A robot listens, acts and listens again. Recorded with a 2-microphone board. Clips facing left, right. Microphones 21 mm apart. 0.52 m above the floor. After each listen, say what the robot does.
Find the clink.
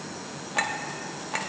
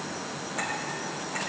Turn 55° left.
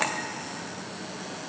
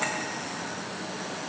Turn 70° left.
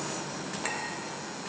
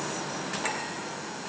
Keep listening.
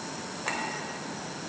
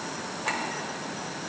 Found it: a clink, straight ahead, 1 to 2 m away.